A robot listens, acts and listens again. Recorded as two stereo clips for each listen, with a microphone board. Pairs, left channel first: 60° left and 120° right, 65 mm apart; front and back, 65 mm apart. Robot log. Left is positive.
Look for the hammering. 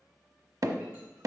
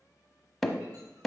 note: The hammering: 85° right.
cmd yaw -85
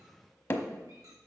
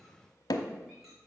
end: Found it: hammering, straight ahead, under 1 m away.